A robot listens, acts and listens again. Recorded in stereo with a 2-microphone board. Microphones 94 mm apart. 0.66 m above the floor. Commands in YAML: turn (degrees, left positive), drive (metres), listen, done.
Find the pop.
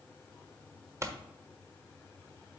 turn: -30
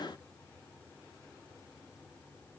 listen: true
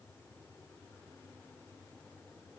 done: "I heard a pop, but can't make it out now. It was about straight ahead or 120° right."